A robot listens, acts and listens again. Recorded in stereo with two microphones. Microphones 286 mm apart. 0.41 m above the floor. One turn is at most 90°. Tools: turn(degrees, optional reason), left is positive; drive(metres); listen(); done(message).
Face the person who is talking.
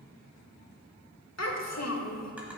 turn(degrees=55, reason="The child speaking: about 55° left or 125° left.")
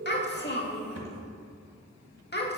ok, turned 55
turn(degrees=40, reason="So it is at 40° left.")
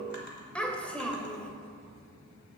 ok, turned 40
done("Facing the child speaking.")